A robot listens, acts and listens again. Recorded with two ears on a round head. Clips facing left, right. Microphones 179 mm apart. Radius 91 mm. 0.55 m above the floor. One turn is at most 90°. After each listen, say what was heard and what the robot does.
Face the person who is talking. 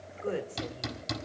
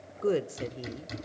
The woman speaking: about 50° right or 130° right. Turn 50° right.
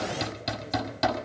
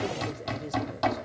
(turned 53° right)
Keep listening.
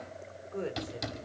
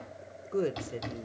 So it is at 60° right. Turn 60° right.
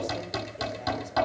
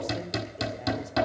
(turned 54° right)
Nothing new. It was at 10° right. Turn 10° right.
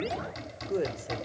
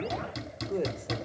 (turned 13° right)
Facing the woman speaking.